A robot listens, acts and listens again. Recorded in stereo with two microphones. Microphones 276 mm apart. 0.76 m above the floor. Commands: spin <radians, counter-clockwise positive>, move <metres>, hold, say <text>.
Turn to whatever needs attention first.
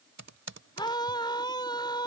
spin 0.26
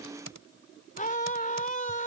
spin 2.62
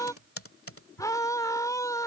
spin 0.26
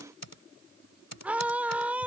say Found it: a scream, straight ahead.